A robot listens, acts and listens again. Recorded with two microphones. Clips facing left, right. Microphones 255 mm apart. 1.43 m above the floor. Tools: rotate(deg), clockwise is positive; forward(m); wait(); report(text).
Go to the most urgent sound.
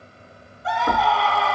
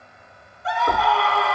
rotate(-30)
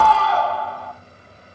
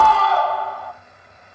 rotate(-150)
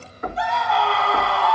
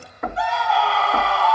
forward(1.0)
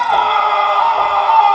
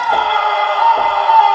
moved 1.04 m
forward(1.0)
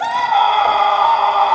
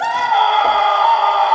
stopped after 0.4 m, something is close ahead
report("I am next to the scream.")